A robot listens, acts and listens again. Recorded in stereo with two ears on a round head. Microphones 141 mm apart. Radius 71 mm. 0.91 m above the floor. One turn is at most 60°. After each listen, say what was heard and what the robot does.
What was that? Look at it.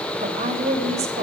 The woman speaking: about 45° right or 135° right. Turn 45° right.
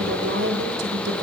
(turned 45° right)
So it is at 90° right. Turn 60° right.
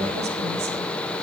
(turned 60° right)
Nothing new. It was at 30° right. Turn 30° right.
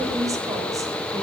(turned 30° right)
The woman speaking is now 20° right. Turn 20° right.
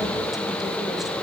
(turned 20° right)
Keep listening.
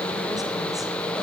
Keep listening.
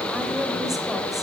Found it: a woman speaking, straight ahead, 2 to 4 m away.